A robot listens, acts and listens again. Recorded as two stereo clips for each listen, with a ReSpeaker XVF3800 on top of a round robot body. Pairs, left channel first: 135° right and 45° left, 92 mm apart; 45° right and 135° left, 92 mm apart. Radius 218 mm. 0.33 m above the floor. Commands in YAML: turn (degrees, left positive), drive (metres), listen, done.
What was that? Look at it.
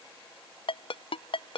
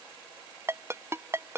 turn: -160
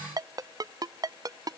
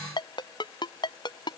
done: "Facing the ringtone."